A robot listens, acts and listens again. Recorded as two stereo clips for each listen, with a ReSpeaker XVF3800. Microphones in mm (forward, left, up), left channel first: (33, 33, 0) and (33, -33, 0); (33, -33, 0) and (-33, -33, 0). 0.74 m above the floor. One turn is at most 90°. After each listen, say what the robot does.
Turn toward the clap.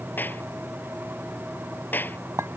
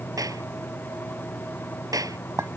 Turn 90° left.
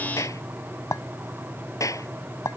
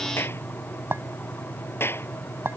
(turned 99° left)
Turn 55° left.
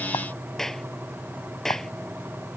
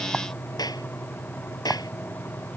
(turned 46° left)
Facing the clap.